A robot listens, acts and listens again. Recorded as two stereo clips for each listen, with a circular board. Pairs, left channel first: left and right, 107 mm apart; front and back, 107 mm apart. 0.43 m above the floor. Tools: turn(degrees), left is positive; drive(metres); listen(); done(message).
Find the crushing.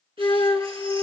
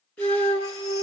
listen()
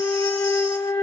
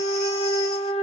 listen()
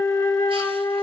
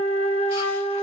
done("I can't make out crushing to turn to.")